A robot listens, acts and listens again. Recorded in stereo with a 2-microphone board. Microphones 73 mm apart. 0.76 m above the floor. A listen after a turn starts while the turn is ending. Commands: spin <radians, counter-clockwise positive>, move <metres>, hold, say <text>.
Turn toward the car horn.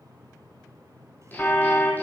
spin 0.52
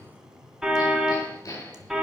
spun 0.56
say Found it: a car horn, straight ahead.